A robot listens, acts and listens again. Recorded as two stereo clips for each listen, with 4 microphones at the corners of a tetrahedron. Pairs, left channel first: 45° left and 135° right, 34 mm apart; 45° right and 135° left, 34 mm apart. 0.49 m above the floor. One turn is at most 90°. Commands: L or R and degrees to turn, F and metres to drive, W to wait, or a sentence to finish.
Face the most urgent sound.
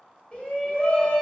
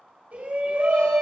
L90
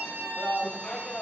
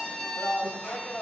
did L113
R15
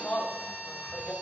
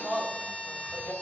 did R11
Facing the shout, 2 to 4 m away.